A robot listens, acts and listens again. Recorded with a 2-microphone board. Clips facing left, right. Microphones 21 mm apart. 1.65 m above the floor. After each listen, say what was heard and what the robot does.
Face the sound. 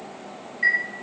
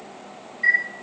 The chime: about 70° left or 110° left. Turn 70° left.
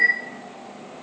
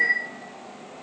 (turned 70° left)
So it is at 40° left. Turn 40° left.
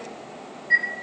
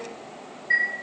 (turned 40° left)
Found it: a chime, straight ahead.